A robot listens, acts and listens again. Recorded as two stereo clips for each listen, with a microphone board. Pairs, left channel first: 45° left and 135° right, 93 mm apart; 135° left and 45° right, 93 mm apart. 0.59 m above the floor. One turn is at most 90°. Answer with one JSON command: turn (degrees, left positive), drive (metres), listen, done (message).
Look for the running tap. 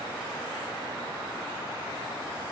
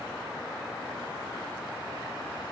{"listen": true}
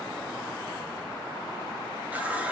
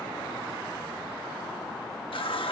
{"turn": 90}
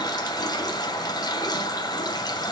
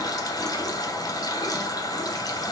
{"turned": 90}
{"turn": 90}
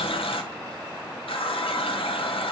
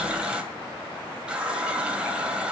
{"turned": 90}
{"turn": 35}
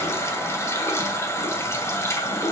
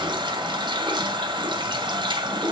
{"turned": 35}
{"turn": -15}
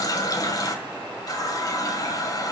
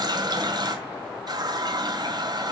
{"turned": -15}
{"done": "Facing the running tap, 2 to 4 m away."}